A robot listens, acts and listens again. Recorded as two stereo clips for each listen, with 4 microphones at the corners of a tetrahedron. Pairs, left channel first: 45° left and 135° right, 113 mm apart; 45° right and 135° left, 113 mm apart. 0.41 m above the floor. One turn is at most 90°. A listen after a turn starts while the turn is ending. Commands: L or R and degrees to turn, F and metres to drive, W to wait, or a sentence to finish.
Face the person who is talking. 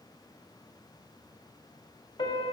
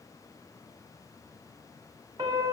W
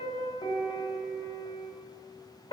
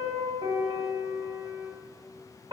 W
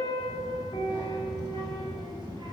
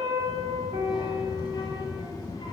R90
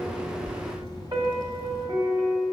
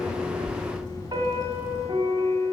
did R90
Facing the child speaking.